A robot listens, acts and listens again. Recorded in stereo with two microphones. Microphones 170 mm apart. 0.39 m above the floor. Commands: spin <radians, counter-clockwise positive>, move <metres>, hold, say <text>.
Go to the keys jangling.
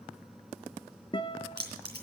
spin -1.57
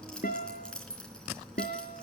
move 1.0
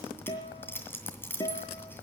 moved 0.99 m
spin 0.26
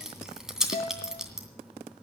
move 1.0
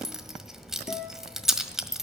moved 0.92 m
move 1.0
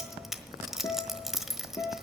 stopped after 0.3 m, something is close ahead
say I am next to the keys jangling.